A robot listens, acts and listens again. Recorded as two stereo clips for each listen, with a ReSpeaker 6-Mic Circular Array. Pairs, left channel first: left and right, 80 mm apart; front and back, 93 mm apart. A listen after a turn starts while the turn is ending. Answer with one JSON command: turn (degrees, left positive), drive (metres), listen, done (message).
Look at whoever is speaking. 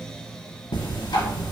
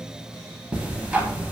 {"listen": true}
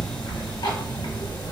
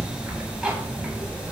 {"listen": true}
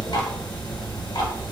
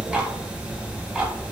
{"done": "I can't make out anyone speaking, only ticking."}